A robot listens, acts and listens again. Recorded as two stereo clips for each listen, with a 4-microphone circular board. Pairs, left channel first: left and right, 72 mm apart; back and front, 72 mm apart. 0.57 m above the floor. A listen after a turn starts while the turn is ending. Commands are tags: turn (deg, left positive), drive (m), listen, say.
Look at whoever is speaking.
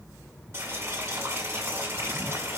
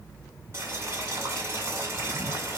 <listen/>
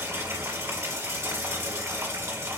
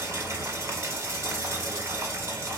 <listen/>
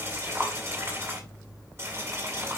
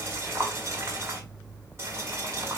<say>I can't make out anyone speaking, only boiling.</say>